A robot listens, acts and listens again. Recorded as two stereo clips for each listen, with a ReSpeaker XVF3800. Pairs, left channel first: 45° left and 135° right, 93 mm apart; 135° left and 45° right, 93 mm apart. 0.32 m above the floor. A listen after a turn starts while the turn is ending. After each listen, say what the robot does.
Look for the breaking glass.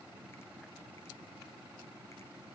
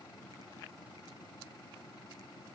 Keep listening.
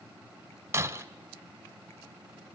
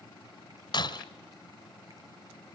Turn 165° left.
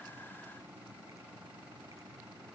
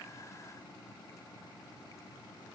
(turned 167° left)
I heard breaking glass from this way, but can't make it out now.